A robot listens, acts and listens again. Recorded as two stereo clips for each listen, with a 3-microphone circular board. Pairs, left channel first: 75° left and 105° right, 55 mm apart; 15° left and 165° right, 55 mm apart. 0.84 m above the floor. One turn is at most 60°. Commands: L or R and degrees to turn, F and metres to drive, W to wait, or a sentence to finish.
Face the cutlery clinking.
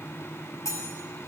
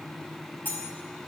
L60
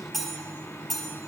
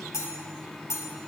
R10
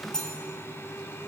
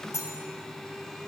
Found it: cutlery clinking, straight ahead.